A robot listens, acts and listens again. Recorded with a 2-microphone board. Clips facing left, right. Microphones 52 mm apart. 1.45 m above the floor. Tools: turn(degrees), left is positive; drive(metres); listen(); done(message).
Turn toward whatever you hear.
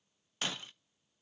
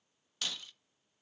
turn(degrees=30)
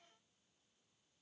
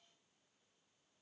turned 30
listen()
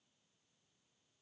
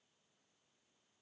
done("I heard breaking glass, but can't make it out now. It was about straight ahead or 120° left.")